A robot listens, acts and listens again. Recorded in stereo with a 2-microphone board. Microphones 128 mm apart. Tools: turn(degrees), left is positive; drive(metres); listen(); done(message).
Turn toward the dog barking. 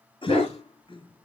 turn(degrees=50)
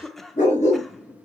turn(degrees=90)
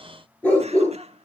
turn(degrees=15)
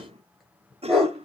done("Facing the dog barking, over 4 m away.")